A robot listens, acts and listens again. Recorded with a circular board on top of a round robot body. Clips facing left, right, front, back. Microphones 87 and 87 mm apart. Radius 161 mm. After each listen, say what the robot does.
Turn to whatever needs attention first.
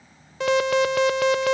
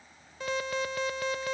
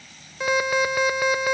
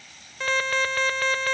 Turn 80° left.
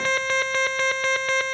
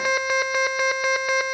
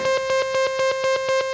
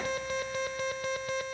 Turn 10° right.
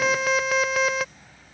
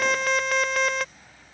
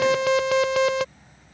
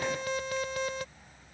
Facing the alarm.